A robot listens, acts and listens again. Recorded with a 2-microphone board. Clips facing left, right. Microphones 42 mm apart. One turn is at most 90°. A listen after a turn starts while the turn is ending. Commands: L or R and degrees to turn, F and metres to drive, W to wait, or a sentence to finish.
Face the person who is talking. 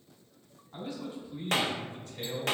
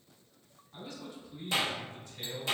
L45
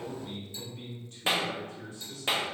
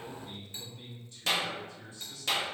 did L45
L70
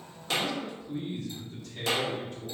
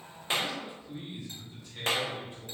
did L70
R15
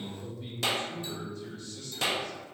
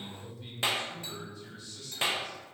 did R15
Found it: a man speaking, straight ahead, 2 to 4 m away.